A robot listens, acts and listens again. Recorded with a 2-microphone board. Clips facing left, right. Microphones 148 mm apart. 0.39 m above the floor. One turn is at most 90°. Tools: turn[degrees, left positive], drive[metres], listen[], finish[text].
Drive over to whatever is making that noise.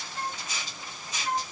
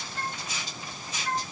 Action: turn[30]
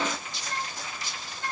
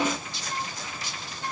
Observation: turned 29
Thought: So it is at 10° right.
Action: turn[-10]
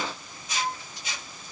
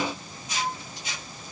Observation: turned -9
Action: drive[1.0]
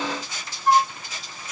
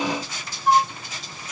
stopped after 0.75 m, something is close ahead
Action: finish[Arrived at the flute, straight ahead.]